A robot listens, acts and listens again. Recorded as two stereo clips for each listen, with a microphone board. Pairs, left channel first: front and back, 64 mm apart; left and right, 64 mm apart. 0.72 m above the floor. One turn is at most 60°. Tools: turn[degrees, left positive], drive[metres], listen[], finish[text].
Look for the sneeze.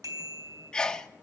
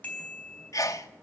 Thought: The sneeze: 75° left.
Action: turn[60]
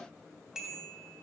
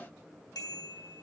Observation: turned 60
Thought: Nothing new. It was at 15° left.
Action: turn[15]
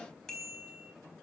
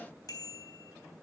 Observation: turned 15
Action: finish[Facing where the sneeze came from. I can't hear it now.]